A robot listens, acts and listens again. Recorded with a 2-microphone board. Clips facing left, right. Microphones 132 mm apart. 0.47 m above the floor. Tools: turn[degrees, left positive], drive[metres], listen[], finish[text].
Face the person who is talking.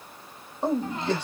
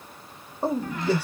Action: turn[-30]
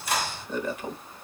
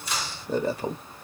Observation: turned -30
Thought: So it is at 140° right.
Action: turn[-140]
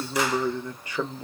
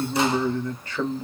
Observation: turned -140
Thought: The man speaking is now 15° left.
Action: turn[15]
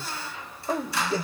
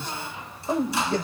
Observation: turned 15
Action: finish[Found it: a man speaking, straight ahead, 1 to 2 m away.]